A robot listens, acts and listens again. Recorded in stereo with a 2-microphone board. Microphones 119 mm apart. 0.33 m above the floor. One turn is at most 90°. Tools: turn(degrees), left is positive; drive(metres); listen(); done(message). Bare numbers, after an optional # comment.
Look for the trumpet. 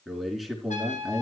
turn(90)
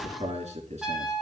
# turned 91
done("Facing the trumpet.")